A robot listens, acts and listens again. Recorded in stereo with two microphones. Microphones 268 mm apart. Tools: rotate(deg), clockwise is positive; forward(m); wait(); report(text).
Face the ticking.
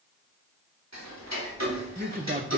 rotate(90)
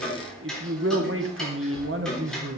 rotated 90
report("Facing the ticking, 2 to 4 m away.")